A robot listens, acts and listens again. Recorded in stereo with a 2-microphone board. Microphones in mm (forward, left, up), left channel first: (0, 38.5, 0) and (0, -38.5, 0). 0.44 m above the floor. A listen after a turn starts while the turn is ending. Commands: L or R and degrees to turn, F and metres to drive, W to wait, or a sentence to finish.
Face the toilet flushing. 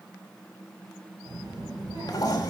L50
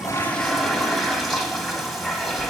Facing the toilet flushing.